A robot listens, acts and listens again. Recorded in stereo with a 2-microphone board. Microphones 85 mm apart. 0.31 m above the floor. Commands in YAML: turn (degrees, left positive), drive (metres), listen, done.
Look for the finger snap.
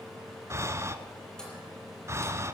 listen: true
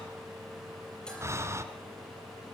listen: true
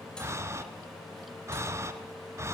done: "I can't make out a finger snap, only breathing."